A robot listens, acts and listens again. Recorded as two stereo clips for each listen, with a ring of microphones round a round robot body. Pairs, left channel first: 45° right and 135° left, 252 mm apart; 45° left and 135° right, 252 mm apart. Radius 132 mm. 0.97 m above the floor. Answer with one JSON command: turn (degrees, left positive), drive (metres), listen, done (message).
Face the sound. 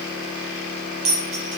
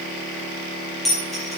{"turn": 135}
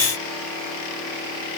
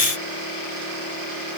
{"done": "I heard a dropped coin from this way, but can't make it out now."}